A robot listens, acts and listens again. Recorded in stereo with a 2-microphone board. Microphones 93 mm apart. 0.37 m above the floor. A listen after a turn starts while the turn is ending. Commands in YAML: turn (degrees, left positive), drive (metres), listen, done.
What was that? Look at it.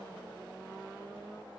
listen: true
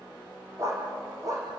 turn: -40
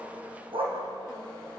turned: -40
turn: -100
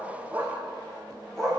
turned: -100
done: "Facing the dog barking, over 4 m away."